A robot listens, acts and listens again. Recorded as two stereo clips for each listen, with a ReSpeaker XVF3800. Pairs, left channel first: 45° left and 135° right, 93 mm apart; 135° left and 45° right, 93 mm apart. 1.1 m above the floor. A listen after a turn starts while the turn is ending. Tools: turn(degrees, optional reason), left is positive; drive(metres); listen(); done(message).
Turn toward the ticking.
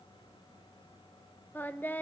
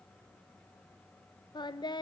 listen()
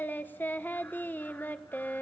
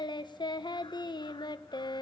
listen()
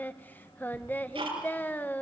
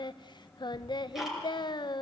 turn(degrees=-135, reason="The ticking: 135° right.")
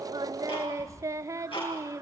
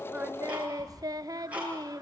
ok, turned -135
turn(degrees=30, reason="The ticking is now 30° left.")
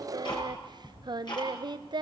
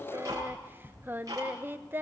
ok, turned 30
done("Found it: ticking, straight ahead.")